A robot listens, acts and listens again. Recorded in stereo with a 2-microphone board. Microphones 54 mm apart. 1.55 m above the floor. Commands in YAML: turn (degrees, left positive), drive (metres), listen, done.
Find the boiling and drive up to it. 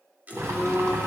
turn: -65
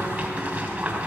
turn: -30
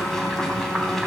drive: 1.0
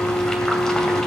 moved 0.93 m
turn: 15
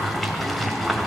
drive: 1.0
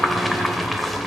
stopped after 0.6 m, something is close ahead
done: "I am next to the boiling."